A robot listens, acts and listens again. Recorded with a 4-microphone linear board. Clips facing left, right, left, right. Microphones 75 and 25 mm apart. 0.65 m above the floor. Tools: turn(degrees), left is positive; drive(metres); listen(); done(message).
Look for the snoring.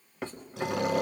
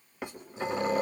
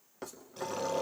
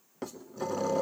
turn(degrees=70)
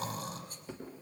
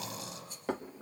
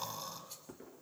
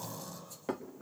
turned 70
turn(degrees=45)
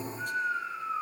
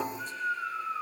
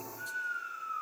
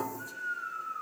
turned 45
turn(degrees=25)
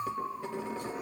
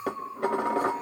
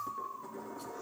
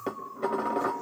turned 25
turn(degrees=10)
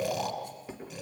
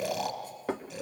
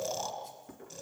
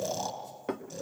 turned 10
done("Facing the snoring.")